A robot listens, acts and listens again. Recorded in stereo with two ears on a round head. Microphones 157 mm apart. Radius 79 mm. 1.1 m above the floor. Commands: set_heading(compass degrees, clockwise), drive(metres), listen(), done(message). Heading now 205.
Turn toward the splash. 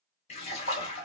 set_heading(165)
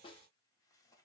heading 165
listen()
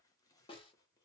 done("I heard a splash, but can't make it out now. It was about straight ahead or 100° left.")